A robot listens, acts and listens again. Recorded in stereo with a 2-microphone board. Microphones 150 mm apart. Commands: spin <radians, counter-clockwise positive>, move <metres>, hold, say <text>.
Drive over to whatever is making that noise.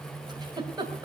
spin -0.52
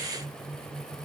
hold
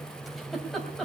move 1.0
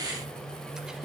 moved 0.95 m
move 1.0
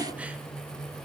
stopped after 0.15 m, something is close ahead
hold
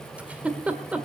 spin -0.17
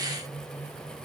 hold
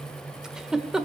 say I am next to the giggle.